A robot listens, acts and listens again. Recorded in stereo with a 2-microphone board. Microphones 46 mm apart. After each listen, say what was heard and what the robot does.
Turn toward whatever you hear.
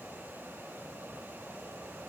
Keep listening.
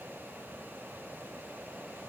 Keep listening.
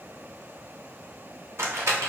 Turn 90° right.
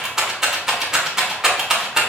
So it is at 10° right. Turn 10° right.
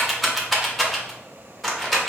Found it: a rattle, straight ahead.